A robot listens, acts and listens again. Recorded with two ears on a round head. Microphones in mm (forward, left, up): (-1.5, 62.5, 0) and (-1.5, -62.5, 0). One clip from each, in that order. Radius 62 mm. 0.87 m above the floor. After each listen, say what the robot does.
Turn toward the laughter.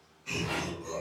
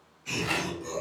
Turn 30° right.
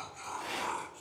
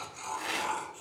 Turn 20° right.
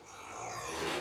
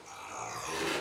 Turn 20° right.
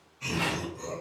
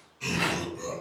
Turn 30° right.
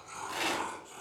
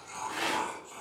Turn 15° right.
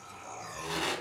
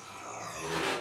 Turn 25° right.
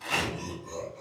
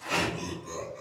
Turn 140° right.
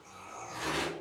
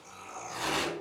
Found it: laughter, straight ahead, 1 to 2 m away.